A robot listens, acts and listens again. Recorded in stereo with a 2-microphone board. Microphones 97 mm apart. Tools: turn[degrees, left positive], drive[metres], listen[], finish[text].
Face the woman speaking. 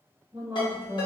Thought: The woman speaking: about 25° right or 155° right.
Action: turn[-25]
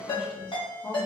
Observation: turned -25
Thought: So it is at 20° left.
Action: turn[20]
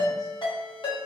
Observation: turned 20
Action: listen[]
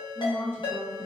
Thought: The woman speaking is now 30° left.
Action: turn[30]
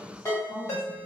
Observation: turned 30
Thought: The woman speaking is now 15° left.
Action: turn[15]
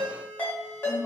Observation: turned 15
Thought: The woman speaking is now 10° left.
Action: turn[10]
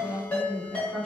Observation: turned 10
Action: finish[Facing the woman speaking, 1 to 2 m away.]